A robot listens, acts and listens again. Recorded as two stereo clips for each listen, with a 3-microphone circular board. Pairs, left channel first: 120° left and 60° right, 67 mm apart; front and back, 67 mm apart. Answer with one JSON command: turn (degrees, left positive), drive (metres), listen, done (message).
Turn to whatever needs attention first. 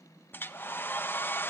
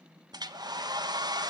{"listen": true}
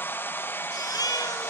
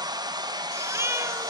{"turn": 135}
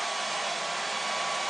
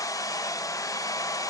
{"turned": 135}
{"listen": true}
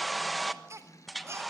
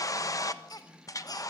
{"turn": -15}
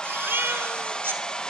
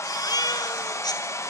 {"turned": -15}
{"done": "Found it: a baby crying, straight ahead, 2 to 4 m away."}